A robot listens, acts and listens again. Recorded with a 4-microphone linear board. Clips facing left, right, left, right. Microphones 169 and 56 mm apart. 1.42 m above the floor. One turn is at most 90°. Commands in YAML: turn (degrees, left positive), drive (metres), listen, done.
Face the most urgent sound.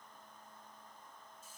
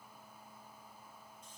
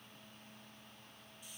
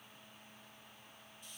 listen: true
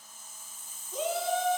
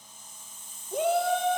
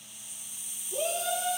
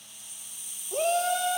turn: -65
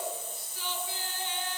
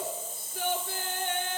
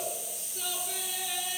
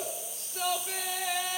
turn: -55
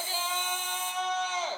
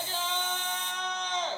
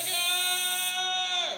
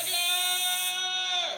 done: "Found it: a shout, straight ahead."